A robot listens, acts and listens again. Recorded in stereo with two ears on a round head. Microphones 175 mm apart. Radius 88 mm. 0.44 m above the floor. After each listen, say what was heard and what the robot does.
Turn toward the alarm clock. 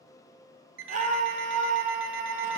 The alarm clock: about 70° right or 110° right. Turn 70° right.
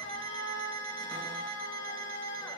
Keep listening.
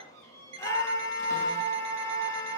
So it is at 35° right. Turn 35° right.
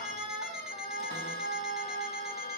Found it: an alarm clock, straight ahead.